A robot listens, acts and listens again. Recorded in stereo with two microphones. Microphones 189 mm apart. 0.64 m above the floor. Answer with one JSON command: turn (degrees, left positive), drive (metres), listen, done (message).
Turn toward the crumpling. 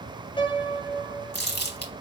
{"turn": 60}
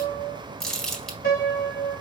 {"done": "Found it: crumpling, straight ahead, 1 to 2 m away."}